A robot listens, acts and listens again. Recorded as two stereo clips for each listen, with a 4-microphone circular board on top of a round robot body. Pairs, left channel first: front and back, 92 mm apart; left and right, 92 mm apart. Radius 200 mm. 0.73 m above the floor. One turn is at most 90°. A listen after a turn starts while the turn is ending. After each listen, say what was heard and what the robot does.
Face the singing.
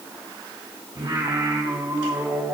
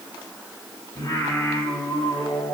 The singing: 125° left. Turn 90° left.
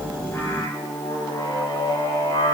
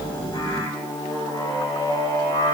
The singing is now 45° left. Turn 45° left.
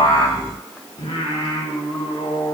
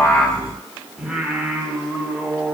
The singing is now 10° right. Turn 10° right.
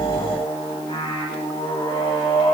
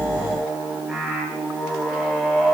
Found it: singing, straight ahead.